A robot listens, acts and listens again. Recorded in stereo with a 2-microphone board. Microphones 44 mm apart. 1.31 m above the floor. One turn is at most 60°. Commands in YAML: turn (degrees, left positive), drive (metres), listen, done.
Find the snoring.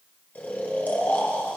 turn: 45
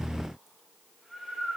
done: "Facing the snoring, 1 to 2 m away."